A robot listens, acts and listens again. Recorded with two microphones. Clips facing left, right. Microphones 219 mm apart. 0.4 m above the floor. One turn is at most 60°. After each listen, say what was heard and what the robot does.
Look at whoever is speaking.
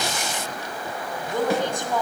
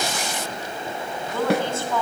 The woman speaking: about 15° left or 165° left. Turn 15° left.
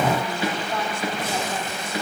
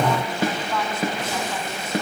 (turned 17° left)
Keep listening.
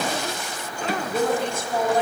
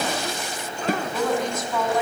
So it is at 150° left. Turn 60° left.
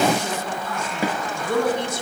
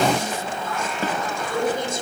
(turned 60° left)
The woman speaking is now 85° left. Turn 60° left.
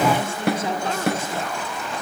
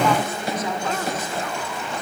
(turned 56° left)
The woman speaking is now 30° left. Turn 30° left.
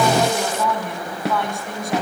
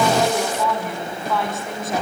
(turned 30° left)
Facing the woman speaking.